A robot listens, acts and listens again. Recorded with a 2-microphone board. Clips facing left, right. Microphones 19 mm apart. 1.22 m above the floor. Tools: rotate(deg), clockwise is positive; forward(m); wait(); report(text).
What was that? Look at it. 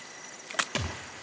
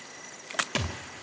rotate(30)
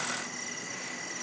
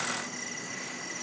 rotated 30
wait()
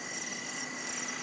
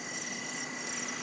report("I heard a thud, but can't make it out now. It was about 20° left or 140° right.")